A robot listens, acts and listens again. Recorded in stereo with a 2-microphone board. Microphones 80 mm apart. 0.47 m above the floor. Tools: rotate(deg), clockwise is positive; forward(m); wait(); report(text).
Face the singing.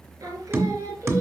rotate(40)
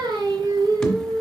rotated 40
rotate(125)
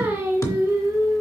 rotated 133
rotate(40)
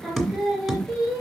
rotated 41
report("Found it: singing, straight ahead, 2 to 4 m away.")